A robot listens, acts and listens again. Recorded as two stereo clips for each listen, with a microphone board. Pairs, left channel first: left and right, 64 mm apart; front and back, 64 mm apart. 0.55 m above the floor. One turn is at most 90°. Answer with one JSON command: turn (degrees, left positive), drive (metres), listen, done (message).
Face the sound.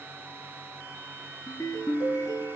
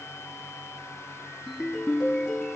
{"turn": 85}
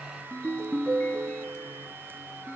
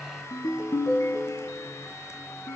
{"turn": 25}
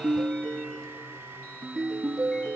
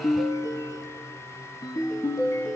{"turn": 10}
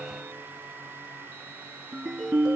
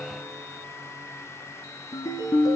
{"done": "Facing the ringtone, 2 to 4 m away."}